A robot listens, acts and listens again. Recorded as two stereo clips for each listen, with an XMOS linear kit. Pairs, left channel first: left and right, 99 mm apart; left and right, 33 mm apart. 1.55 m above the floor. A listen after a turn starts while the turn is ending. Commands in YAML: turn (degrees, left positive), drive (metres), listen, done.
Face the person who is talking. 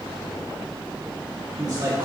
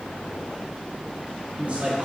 turn: -45
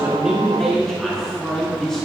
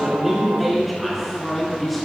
done: "Facing the man speaking."